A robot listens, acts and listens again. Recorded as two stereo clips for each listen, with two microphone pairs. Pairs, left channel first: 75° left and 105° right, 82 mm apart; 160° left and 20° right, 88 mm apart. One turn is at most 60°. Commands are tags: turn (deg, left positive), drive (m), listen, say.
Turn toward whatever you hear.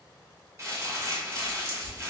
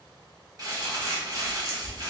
<turn deg="-55"/>
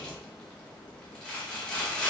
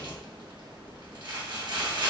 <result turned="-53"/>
<say>Found it: crumpling, straight ahead, 1 to 2 m away.</say>